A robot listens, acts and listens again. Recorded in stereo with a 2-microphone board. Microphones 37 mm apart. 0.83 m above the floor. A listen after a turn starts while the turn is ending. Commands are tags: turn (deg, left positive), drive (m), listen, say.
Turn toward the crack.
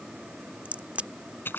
<turn deg="-40"/>
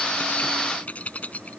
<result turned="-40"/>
<listen/>
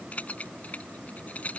<say>I heard a crack, but can't make it out now. It was about straight ahead or 100° right.</say>